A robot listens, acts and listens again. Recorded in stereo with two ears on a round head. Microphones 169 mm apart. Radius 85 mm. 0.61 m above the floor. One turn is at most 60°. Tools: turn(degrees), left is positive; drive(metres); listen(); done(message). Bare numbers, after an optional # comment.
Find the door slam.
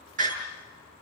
# The door slam: about 45° right or 135° right.
turn(-45)
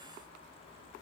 listen()
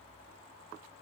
done("I heard a door slam, but can't make it out now. It was about straight ahead or 90° right.")